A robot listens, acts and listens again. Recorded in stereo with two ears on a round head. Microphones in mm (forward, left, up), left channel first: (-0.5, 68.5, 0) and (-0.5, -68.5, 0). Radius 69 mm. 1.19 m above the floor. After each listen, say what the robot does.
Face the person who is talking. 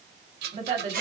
Turn 45° right.
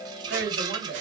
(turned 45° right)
Turn 90° right.
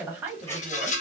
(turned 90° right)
Turn 10° right.
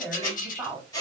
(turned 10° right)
Found it: a woman speaking, straight ahead.